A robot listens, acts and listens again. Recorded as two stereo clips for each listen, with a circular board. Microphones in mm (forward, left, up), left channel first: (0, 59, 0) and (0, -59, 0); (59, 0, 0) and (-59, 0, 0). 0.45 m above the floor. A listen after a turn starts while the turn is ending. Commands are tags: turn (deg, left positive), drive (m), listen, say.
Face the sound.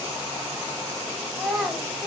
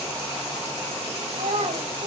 <turn deg="-175"/>
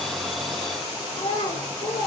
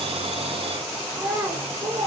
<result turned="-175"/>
<turn deg="130"/>
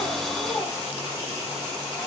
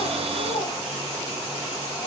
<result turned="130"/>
<listen/>
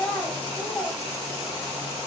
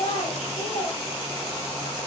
<turn deg="15"/>
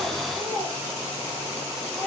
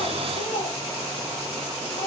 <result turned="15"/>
<say>Found it: a child speaking, straight ahead.</say>